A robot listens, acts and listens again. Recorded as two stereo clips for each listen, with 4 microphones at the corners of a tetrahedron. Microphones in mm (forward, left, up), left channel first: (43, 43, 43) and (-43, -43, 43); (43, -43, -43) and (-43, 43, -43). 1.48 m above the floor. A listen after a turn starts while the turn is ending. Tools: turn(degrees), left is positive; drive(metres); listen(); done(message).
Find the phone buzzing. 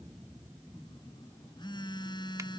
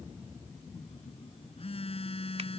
done("Facing the phone buzzing.")